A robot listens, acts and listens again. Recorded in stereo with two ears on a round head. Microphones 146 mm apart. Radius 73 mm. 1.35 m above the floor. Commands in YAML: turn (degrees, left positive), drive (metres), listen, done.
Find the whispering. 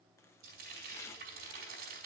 listen: true
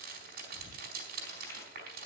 turn: 50
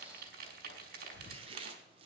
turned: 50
turn: 80
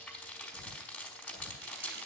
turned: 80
done: "Found it: whispering, straight ahead."